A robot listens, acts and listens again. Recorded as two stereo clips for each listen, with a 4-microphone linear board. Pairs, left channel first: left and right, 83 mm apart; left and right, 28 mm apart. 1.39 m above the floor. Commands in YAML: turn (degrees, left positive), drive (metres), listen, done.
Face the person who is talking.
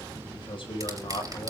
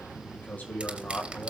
turn: 90
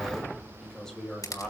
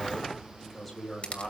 done: "Found it: a man speaking, straight ahead."